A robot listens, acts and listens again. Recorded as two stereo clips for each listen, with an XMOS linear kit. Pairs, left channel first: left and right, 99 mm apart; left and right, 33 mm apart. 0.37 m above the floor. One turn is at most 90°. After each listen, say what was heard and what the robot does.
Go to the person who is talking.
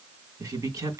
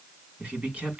The man speaking: about 35° right or 145° right. Turn 35° right.
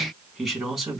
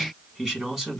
Drive 1.0 m forward.
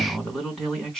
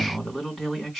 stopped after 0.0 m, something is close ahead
Blocked. The man speaking is further on, straight ahead.